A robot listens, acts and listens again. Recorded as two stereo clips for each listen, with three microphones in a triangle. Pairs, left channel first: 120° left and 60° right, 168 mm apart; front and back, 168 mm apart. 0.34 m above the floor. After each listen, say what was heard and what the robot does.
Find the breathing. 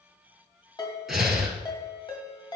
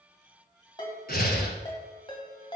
The breathing: 30° left. Turn 30° left.
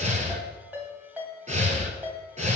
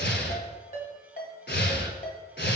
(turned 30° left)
The breathing is now 10° right. Turn 10° right.
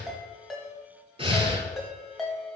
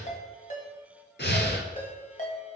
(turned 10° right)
Found it: breathing, straight ahead.